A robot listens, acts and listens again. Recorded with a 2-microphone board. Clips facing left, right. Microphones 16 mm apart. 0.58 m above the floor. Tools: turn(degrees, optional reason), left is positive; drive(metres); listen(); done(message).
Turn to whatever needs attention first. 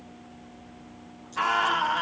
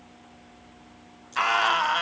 turn(degrees=-90)
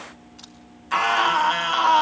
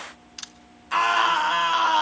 done("Found it: a scream, straight ahead.")